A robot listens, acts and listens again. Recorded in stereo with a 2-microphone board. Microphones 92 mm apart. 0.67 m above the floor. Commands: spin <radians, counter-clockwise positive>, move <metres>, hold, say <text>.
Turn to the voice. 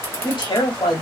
spin 0.96
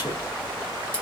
hold
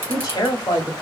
spin 0.96
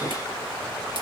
hold
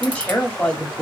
spin 0.26
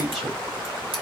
say Found it: a woman speaking, straight ahead.